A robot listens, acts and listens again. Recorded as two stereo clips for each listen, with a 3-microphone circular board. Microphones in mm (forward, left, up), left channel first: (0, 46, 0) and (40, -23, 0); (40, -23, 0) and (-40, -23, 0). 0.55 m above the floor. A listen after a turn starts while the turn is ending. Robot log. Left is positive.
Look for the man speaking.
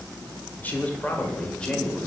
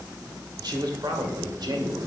note: The man speaking: 160° right.
cmd yaw -160
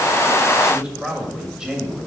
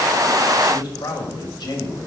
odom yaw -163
note: The man speaking is now 25° left.
cmd yaw +25
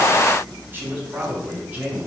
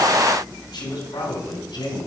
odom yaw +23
note: The man speaking is now 10° left.
cmd yaw +10
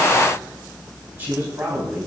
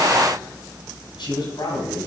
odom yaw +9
end: Found it: a man speaking, straight ahead.